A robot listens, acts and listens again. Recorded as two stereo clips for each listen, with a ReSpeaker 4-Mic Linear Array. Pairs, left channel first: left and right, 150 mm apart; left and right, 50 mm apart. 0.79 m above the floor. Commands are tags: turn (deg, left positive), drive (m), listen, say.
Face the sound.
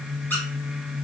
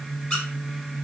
<turn deg="30"/>
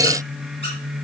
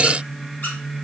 <listen/>
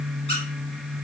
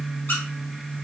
<listen/>
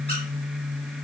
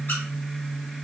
<say>I heard a squeak, but can't make it out now. It was about 15° right or 135° left.</say>